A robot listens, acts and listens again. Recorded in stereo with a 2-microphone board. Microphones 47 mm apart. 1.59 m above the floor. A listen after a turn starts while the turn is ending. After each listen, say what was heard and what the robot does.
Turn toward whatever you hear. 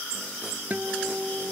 The guitar: about 40° right or 140° right. Turn 40° right.
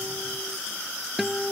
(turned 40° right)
Facing the guitar.